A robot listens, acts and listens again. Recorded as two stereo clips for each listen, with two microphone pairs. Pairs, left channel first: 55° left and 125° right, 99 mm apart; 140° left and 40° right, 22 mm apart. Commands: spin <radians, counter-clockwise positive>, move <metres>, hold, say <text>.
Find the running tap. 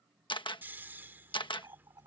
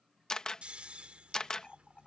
spin -3.05
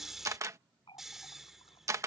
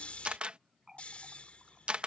spin 0.52
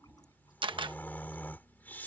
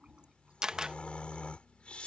say Facing the running tap.